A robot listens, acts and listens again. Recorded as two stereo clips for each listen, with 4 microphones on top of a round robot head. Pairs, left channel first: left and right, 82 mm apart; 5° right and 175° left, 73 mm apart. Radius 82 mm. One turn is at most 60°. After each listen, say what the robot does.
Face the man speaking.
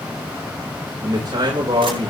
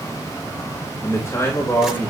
Turn 60° right.
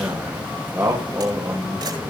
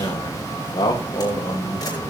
Turn 30° right.
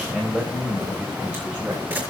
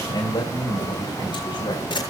Turn 15° right.
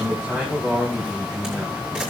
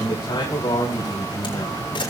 Turn 10° right.
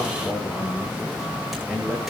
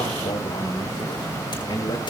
Facing the man speaking.